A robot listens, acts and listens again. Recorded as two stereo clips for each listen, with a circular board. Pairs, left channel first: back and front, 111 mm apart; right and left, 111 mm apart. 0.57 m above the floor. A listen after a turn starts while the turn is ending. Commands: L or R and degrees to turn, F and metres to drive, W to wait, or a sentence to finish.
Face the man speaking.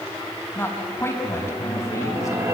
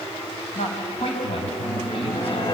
R120
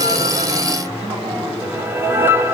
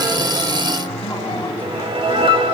W
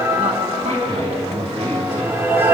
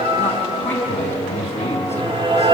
R20
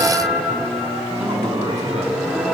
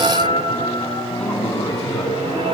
Facing the man speaking, over 4 m away.